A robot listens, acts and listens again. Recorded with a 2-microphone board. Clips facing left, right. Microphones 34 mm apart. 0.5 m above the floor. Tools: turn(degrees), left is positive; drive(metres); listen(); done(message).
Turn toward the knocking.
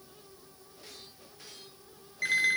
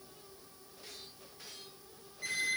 listen()
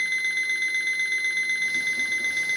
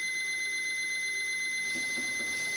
listen()
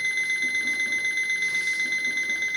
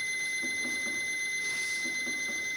done("I can't make out knocking to turn to.")